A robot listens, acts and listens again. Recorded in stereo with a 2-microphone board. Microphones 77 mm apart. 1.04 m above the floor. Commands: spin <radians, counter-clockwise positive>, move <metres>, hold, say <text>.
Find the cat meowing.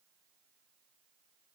hold
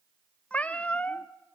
spin 0.26
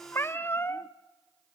spin 2.62
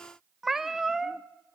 say Facing the cat meowing.